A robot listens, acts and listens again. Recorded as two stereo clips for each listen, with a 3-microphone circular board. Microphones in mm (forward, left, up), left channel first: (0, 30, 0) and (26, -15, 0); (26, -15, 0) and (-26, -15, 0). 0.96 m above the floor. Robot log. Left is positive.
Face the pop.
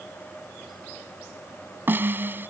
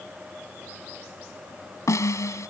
cmd idle
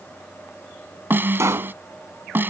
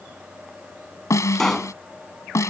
note: The pop: 85° right.
cmd yaw -85
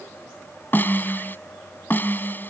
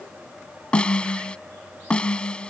end: I heard a pop from this way, but can't make it out now.